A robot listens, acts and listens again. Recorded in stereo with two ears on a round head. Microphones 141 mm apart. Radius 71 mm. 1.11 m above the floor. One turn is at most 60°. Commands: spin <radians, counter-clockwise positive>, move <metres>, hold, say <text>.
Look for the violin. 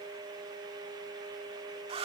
hold
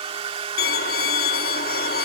spin 1.05
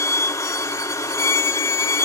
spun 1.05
spin 0.35
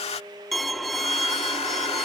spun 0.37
say Found it: a violin, straight ahead.